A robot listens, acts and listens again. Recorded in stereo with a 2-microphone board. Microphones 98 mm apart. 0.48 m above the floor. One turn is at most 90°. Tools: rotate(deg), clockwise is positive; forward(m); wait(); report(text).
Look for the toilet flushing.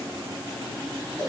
wait()
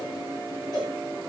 wait()
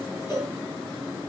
report("I can't make out a toilet flushing, only a cowbell.")